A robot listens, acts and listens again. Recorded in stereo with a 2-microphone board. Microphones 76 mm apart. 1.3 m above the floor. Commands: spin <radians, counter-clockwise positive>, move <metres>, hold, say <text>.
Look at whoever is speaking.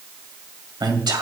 spin -1.57
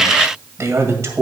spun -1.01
spin -0.70
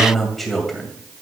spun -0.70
say Found it: a man speaking, straight ahead.